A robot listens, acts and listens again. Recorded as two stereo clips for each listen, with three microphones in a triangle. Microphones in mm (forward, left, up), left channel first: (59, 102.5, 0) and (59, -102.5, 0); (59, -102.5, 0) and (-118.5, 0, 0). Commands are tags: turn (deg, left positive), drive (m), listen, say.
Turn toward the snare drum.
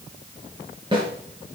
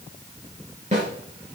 <turn deg="-155"/>
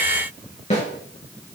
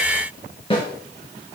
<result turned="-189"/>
<turn deg="35"/>
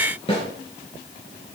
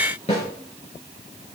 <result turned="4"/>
<turn deg="30"/>
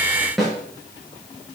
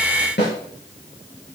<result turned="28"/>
<say>Found it: a snare drum, straight ahead, over 4 m away.</say>